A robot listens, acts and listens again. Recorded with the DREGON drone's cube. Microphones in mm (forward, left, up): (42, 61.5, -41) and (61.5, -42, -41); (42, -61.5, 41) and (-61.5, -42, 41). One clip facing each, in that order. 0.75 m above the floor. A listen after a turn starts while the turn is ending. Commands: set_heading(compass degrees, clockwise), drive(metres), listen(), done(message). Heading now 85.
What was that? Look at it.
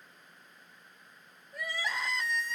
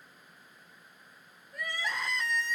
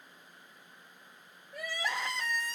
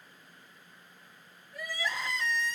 set_heading(75)
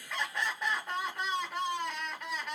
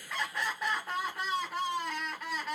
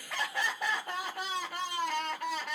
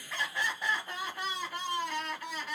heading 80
set_heading(70)
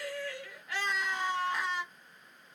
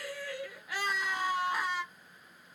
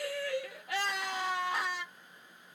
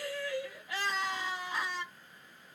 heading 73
done("Facing the crying.")